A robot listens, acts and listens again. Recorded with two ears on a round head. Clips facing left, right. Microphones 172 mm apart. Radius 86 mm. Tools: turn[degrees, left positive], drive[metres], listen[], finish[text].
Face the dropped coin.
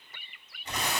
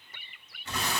Action: listen[]
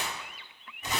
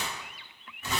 Action: listen[]
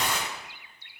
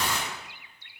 Action: finish[I can't make out a dropped coin to turn to.]